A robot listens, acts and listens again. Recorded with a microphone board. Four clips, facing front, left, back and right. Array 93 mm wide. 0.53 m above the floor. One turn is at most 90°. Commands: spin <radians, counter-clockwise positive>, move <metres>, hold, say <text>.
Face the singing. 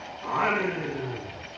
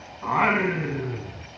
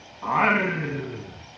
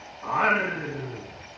spin 1.57
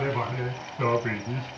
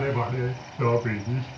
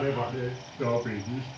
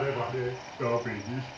spin 0.52
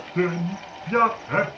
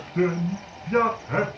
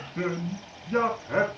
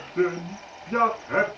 say Facing the singing.